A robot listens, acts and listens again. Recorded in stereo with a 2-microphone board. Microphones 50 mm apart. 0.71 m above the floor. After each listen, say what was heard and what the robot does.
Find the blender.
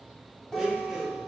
Turn 30° right.
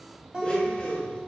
So it is at 25° left. Turn 25° left.
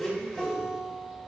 The blender is now 15° left. Turn 15° left.
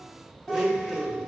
Found it: a blender, straight ahead, under 1 m away.